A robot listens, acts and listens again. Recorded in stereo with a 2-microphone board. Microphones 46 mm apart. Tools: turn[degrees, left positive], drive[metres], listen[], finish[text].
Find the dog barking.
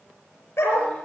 Thought: The dog barking: about 65° left or 115° left.
Action: turn[65]
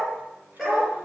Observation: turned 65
Action: finish[Facing the dog barking.]